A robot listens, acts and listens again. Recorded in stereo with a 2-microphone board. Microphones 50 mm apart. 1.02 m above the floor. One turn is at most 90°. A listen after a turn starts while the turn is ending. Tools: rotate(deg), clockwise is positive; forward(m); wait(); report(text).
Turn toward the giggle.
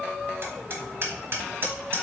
wait()
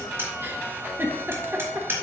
rotate(45)
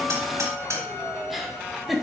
report("Facing the giggle, 1 to 2 m away.")